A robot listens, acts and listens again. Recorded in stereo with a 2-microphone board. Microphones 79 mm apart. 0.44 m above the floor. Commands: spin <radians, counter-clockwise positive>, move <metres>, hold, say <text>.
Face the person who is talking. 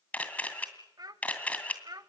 spin -0.96
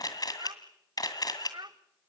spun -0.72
spin -1.40
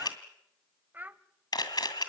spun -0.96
spin -0.44
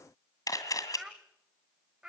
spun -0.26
spin -0.17
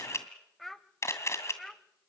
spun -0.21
say Facing the child speaking.